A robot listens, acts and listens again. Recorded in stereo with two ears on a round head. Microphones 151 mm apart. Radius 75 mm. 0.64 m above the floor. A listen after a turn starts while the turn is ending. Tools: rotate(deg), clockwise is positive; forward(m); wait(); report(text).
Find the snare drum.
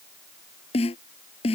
rotate(-40)
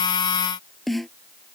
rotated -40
report("Found it: a snare drum, straight ahead.")